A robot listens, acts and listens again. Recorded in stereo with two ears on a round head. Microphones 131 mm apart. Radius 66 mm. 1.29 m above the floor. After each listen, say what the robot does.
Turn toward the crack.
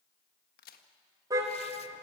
Turn 70° left.
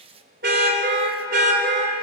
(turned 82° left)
Keep listening.
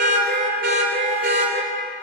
I heard a crack, but can't make it out now. It was about 10° right or 25° left.